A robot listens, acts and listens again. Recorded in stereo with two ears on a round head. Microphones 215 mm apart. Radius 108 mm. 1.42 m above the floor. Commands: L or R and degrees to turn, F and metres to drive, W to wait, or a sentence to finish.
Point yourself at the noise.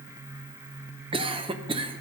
R20
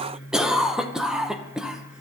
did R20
Found it: a cough, straight ahead.